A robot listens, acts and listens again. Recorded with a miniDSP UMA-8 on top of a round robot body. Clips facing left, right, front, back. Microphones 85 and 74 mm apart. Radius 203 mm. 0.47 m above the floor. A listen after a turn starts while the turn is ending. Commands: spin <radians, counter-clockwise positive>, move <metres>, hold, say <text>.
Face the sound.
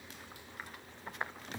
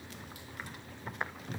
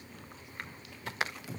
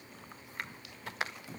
hold
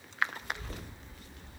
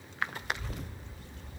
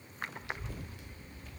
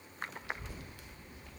spin 1.92
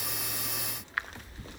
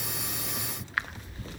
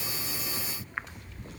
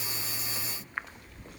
spin 0.35
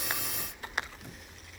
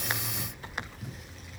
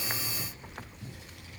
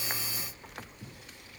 say Facing the child speaking.